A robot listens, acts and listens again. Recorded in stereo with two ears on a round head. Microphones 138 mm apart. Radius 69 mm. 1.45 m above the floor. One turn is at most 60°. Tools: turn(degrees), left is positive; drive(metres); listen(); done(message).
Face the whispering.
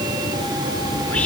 turn(degrees=30)
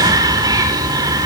turn(degrees=-25)
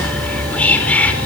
turn(degrees=10)
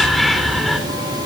done("Found it: whispering, straight ahead, over 4 m away.")